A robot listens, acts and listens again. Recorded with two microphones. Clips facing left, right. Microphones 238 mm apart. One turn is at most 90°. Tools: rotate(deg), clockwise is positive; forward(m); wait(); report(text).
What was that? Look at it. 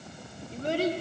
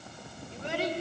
rotate(-45)
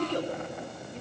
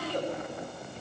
rotate(-90)
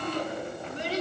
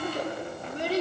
rotate(55)
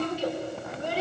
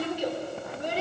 rotate(20)
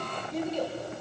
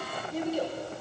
report("Facing the child speaking, 2 to 4 m away.")